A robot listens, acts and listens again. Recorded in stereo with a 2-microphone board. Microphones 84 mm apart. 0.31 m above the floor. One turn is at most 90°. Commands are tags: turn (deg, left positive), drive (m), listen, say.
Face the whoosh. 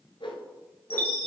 <turn deg="90"/>
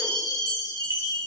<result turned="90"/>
<listen/>
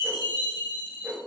<turn deg="-10"/>
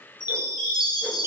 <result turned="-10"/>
<listen/>
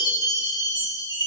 <listen/>
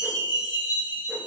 <say>I heard a whoosh from this way, but can't make it out now.</say>